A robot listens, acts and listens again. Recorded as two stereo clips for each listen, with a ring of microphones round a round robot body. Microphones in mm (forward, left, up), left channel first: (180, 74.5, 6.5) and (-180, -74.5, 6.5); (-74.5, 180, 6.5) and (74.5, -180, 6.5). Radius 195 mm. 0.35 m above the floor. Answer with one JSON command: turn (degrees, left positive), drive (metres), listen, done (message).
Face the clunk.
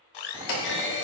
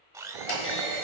{"turn": 55}
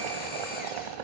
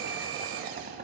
{"done": "Facing where the clunk came from. I can't hear it now."}